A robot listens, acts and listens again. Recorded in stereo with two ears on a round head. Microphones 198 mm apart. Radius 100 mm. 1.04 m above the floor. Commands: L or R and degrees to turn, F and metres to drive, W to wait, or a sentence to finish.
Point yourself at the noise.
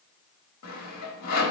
L90
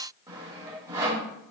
R20
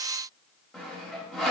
Facing the sawing.